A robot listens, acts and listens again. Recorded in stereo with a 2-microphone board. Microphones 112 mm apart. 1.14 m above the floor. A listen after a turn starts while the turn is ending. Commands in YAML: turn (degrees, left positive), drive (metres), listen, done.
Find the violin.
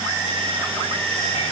listen: true
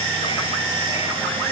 listen: true
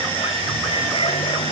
done: "I can't make out a violin."